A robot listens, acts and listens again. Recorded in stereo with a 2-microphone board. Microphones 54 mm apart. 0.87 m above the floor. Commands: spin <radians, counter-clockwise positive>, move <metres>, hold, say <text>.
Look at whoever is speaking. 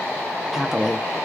spin -0.52
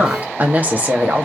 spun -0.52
spin -2.62
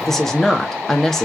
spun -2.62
say Facing the woman speaking, 1 to 2 m away.